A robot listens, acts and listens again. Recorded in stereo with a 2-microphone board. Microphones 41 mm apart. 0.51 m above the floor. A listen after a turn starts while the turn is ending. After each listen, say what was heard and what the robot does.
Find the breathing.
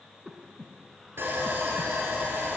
Turn 30° left.
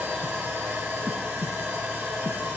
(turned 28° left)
So it is at 30° right. Turn 30° right.
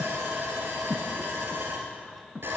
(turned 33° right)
Facing the breathing.